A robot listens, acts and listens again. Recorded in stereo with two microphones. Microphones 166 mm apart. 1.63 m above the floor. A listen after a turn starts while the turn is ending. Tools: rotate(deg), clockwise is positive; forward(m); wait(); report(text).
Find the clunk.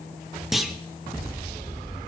rotate(-30)
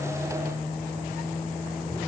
wait()
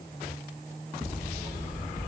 report("I heard a clunk, but can't make it out now. It was about 30° right or 150° left.")